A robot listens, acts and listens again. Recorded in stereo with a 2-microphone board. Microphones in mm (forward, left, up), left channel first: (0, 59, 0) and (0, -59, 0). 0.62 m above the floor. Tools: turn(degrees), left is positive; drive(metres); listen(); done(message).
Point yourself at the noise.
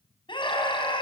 turn(degrees=45)
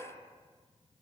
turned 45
listen()
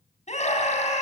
turn(degrees=95)
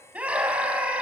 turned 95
turn(degrees=-10)
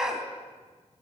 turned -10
done("Found it: a scream, straight ahead.")